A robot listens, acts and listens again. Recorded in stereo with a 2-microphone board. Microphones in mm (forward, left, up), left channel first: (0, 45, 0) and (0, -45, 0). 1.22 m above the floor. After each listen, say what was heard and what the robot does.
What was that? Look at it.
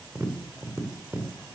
The tapping: about 35° right or 145° right. Turn 35° right.
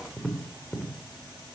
Facing the tapping, 2 to 4 m away.